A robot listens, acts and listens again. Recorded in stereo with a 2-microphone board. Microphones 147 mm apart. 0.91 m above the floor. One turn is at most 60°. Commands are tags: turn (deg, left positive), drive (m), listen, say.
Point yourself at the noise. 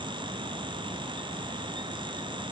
<listen/>
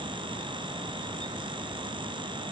<listen/>
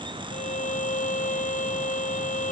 <turn deg="60"/>
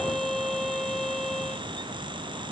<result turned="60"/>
<say>Facing the violin.</say>